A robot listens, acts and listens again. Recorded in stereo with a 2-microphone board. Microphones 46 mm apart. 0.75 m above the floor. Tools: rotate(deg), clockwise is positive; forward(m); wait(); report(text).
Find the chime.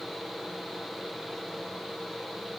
wait()
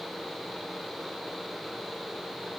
wait()
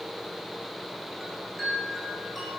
rotate(-30)
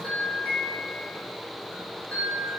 rotate(-150)
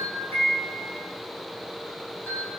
rotate(-45)
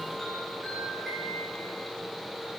report("Facing the chime, over 4 m away.")